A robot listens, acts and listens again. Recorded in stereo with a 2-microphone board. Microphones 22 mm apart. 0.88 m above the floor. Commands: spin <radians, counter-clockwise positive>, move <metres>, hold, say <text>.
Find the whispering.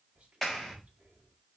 spin -1.22
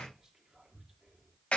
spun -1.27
spin -0.44
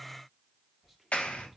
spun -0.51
say Facing the whispering, 1 to 2 m away.